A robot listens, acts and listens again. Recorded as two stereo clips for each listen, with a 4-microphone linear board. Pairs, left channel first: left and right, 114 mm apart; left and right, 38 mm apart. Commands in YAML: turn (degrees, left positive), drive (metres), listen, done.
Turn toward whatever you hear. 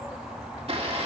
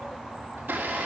turn: -60
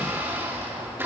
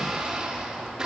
turn: -25
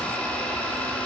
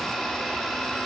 turn: 10
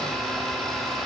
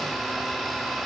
done: "Facing the blender, 1 to 2 m away."